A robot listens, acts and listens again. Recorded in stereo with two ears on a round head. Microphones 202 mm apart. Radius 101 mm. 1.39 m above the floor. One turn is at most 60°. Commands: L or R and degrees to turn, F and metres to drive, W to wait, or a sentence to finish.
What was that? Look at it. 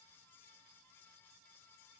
W
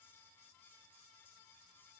W
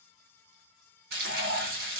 R45
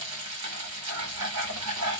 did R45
R60
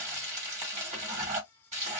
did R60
R30
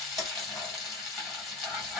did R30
Found it: frying, straight ahead, 1 to 2 m away.